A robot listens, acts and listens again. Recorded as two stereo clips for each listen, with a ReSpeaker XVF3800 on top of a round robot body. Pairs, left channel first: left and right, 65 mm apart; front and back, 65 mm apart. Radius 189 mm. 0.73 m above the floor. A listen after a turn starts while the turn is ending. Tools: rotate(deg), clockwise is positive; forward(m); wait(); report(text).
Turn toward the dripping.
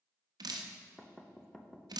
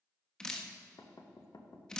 rotate(80)
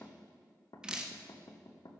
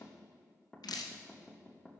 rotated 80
rotate(10)
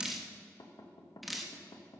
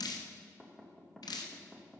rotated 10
report("Found it: dripping, straight ahead, 1 to 2 m away.")